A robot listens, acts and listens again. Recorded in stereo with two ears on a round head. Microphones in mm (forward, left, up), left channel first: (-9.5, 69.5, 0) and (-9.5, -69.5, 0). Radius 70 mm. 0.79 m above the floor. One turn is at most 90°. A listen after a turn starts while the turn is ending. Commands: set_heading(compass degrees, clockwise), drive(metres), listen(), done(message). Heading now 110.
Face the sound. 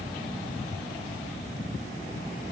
listen()
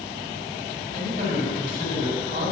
set_heading(175)
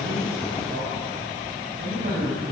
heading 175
set_heading(225)
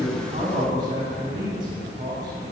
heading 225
set_heading(255)
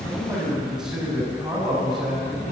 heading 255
done("Facing the man speaking, over 4 m away.")